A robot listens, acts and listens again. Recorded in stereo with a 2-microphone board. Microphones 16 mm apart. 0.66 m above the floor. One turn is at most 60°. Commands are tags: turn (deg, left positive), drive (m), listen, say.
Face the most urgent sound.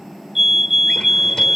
<turn deg="-25"/>
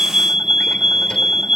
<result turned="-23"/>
<turn deg="-60"/>
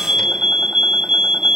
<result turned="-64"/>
<turn deg="-60"/>
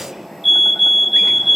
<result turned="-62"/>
<say>Facing the fire alarm.</say>